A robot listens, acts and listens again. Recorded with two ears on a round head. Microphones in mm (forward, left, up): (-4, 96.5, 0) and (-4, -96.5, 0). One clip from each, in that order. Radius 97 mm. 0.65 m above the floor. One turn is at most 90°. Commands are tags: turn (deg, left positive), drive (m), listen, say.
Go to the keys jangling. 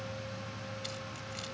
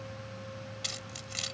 <turn deg="-45"/>
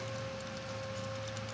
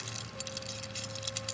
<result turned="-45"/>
<listen/>
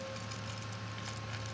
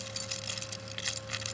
<turn deg="-90"/>
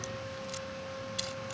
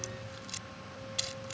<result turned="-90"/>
<turn deg="-10"/>
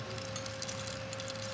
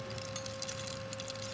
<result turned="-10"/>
<listen/>
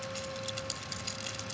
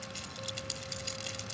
<drive m="1.0"/>
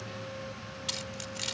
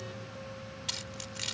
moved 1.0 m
<drive m="1.0"/>
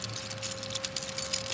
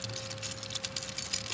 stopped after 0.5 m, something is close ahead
<say>I am next to the keys jangling.</say>